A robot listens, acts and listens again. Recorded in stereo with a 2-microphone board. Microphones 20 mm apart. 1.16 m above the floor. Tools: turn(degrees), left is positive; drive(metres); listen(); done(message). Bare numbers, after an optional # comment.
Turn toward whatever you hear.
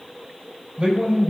# The man speaking: about 40° right or 140° right.
turn(-40)
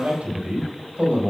# So it is at 100° right.
turn(-100)
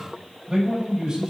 # The man speaking is now 55° right.
turn(-55)
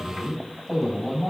done("Found it: a man speaking, straight ahead, over 4 m away.")